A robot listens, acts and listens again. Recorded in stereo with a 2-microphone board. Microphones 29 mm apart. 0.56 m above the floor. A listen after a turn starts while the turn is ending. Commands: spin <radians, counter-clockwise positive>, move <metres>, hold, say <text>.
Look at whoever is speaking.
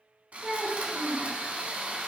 spin -0.79
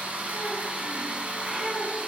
hold
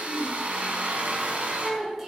say Found it: a child speaking, straight ahead.